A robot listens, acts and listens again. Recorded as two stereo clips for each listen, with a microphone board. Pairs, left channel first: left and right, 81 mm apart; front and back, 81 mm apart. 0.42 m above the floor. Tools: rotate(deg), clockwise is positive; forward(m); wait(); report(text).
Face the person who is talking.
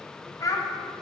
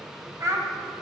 rotate(-135)
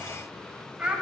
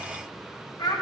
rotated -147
rotate(15)
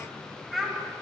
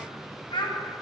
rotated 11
report("Found it: a child speaking, straight ahead.")